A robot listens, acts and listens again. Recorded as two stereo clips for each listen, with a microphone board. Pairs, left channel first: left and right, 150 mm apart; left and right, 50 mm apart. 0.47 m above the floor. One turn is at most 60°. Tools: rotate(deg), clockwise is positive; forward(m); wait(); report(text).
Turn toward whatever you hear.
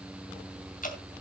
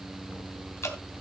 rotate(-60)
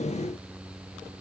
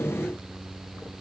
wait()
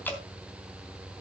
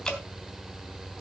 rotate(-15)
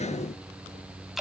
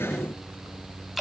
report("Found it: dripping, straight ahead.")